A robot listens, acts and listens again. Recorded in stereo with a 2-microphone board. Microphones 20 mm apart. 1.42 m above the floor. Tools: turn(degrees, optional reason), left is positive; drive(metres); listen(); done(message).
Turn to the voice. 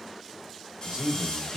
turn(degrees=-75, reason="The man speaking: about 75° right or 105° right.")
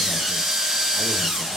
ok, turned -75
listen()
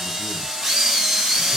listen()
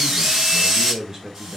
turn(degrees=-30, reason="So it is at 30° right.")
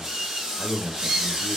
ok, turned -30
turn(degrees=-15, reason="The man speaking is now 15° right.")
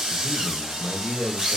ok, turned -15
done("Found it: a man speaking, straight ahead, 1 to 2 m away.")